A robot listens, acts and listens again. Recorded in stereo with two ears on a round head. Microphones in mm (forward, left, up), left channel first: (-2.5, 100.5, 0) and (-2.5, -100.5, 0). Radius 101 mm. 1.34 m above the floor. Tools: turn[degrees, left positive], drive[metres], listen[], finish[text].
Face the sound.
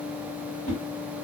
Thought: The whoosh: about 40° left or 140° left.
Action: turn[40]
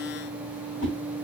Thought: So it is at 90° left.
Action: turn[90]
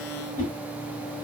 Thought: The whoosh is now 35° left.
Action: turn[35]
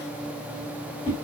Thought: The whoosh is now 20° left.
Action: turn[20]
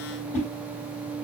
Action: finish[Facing the whoosh, 1 to 2 m away.]